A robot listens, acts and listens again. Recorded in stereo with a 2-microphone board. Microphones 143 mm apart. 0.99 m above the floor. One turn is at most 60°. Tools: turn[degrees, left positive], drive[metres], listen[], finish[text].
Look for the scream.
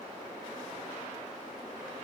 Action: listen[]
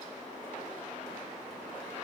Action: listen[]
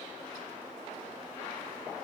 Action: finish[I can't make out a scream.]